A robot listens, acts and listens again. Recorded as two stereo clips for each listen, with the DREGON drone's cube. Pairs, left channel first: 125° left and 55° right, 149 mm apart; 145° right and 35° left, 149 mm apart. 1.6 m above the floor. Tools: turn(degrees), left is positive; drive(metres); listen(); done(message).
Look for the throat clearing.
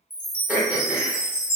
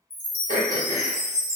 turn(degrees=25)
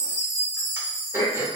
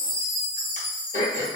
turn(degrees=15)
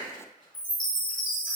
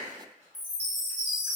listen()
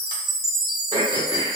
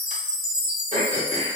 done("Found it: throat clearing, straight ahead.")